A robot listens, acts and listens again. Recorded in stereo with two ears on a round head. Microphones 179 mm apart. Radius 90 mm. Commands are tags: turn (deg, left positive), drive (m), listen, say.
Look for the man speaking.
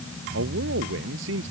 <turn deg="-65"/>
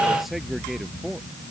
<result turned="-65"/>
<say>Facing the man speaking.</say>